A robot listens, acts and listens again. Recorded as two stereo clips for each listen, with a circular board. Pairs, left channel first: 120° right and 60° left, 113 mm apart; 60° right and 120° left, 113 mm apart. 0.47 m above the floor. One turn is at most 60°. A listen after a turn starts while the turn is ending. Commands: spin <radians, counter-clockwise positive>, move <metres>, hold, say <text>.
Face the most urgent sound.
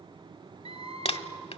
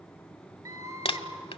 spin 1.05
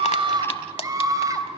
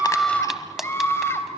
say Found it: a scream, straight ahead, 2 to 4 m away.